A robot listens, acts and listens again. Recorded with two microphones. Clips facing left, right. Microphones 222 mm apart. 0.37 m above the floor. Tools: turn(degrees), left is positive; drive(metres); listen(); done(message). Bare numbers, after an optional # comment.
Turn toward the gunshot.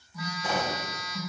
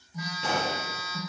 turn(-90)
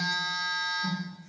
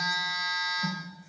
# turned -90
done("I heard a gunshot from this way, but can't make it out now.")